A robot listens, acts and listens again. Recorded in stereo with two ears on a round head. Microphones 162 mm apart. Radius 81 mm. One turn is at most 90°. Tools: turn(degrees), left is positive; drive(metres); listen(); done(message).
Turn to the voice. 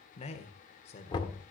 turn(degrees=35)
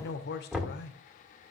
turn(degrees=90)
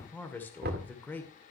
turn(degrees=10)
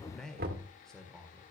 done("Facing the man speaking, 1 to 2 m away.")